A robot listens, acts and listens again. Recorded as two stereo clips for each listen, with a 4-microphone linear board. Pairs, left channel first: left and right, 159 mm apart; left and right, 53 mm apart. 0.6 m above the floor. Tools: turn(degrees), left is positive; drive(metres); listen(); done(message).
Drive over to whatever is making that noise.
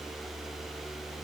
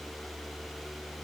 listen()
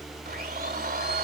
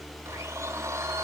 turn(degrees=-75)
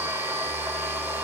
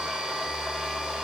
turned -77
turn(degrees=-15)
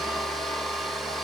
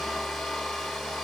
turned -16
drive(metres=1.0)
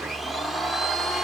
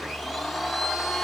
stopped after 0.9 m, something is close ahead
done("Arrived at the blender, straight ahead.")